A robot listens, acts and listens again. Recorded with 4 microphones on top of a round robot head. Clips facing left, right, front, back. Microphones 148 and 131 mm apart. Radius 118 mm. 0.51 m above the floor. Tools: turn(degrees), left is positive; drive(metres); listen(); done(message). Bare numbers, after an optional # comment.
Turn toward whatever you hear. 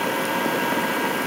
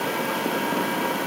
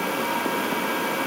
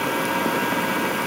listen()
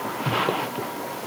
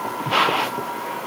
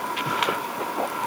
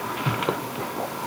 listen()
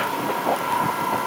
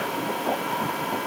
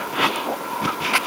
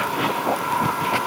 done("I can't make out anything to turn to.")